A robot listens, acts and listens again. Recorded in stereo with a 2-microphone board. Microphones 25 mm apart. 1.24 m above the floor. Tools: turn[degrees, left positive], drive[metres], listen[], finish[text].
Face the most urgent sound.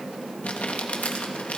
Action: listen[]
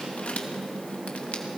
Action: listen[]
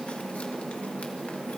Action: finish[I can't make out anything urgent, only crumpling.]